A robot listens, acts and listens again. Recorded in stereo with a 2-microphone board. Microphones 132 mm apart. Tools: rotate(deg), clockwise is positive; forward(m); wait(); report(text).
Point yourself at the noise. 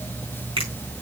rotate(45)
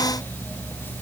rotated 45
wait()
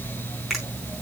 report("Found it: a finger snap, straight ahead.")